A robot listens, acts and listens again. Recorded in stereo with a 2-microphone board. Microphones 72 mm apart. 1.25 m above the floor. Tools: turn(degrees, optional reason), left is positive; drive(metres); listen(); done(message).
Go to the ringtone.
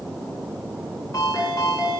turn(degrees=55, reason="The ringtone: about 55° left or 125° left.")
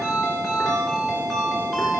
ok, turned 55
drive(metres=1.0)
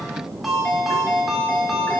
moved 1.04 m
drive(metres=1.0)
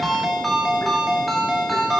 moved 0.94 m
drive(metres=1.0)
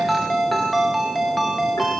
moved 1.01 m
drive(metres=1.0)
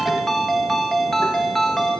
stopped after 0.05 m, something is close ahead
done("I am next to the ringtone.")